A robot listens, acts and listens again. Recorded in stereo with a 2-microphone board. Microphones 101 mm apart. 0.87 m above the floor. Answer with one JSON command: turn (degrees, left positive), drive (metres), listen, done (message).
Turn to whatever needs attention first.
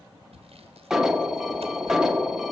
{"turn": -30}
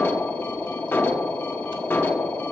{"turn": 25}
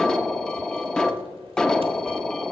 {"turn": 10}
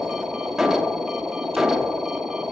{"done": "Found it: an alarm, straight ahead."}